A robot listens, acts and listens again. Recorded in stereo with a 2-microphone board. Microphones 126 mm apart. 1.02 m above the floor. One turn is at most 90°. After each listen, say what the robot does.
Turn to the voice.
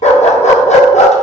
Keep listening.
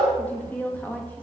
Turn 30° left.
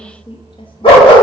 Turn 90° left.
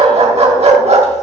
Turn 45° left.
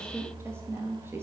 Turn 20° right.
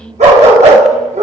Facing the woman speaking, 1 to 2 m away.